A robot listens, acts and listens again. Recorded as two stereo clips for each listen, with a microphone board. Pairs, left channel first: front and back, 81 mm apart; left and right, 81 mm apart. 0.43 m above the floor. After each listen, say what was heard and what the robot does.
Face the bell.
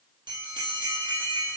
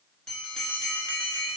The bell: 170° left. Turn 170° left.
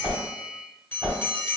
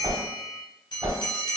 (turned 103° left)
The bell is now 65° left. Turn 65° left.
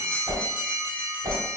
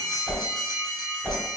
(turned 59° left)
Facing the bell.